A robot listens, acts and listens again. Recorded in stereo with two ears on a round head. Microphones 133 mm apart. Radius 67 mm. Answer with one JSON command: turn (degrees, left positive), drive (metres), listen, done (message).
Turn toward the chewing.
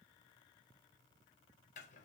{"listen": true}
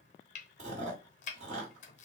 {"turn": -50}
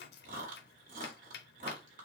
{"turn": -70}
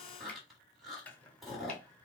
{"done": "Found it: chewing, straight ahead."}